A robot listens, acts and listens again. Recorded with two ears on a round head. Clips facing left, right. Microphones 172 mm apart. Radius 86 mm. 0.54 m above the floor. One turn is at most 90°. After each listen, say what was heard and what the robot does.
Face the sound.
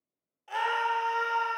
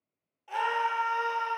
Turn 30° left.
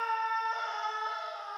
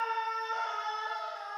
So it is at 25° right. Turn 25° right.
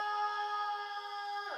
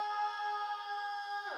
Found it: a scream, straight ahead, 1 to 2 m away.